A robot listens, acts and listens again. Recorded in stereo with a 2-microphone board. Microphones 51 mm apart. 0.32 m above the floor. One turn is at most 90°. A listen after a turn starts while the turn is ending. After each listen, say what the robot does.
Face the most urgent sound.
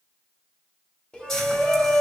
Turn 15° left.
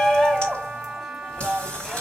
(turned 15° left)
Facing the shout.